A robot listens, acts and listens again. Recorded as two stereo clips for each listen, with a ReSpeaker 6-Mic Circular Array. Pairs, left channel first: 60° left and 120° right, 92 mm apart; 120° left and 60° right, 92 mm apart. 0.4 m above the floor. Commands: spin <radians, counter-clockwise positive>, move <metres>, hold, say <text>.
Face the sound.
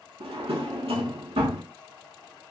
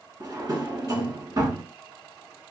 spin -1.83
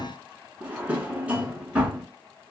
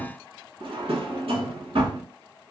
spin -0.79
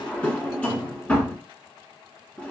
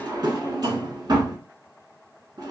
spin -0.35
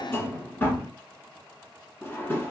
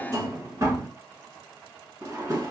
say Found it: a drawer, straight ahead, under 1 m away.